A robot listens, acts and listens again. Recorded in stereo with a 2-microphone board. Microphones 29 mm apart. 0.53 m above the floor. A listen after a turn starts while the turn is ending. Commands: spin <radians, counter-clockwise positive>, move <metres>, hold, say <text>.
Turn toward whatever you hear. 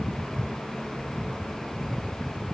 hold
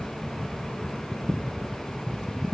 hold
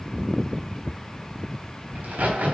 spin -1.22
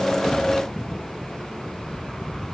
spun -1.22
hold
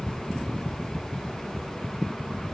say I heard a crack, but can't make it out now. It was about straight ahead or 40° right.